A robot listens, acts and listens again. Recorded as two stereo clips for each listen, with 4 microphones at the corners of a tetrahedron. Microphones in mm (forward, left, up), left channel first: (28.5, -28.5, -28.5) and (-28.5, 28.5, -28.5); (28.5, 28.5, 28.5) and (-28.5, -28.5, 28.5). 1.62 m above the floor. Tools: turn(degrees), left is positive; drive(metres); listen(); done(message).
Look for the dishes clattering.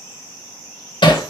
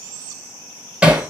listen()
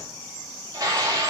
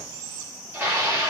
turn(degrees=165)
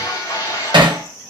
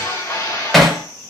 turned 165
done("Facing the dishes clattering.")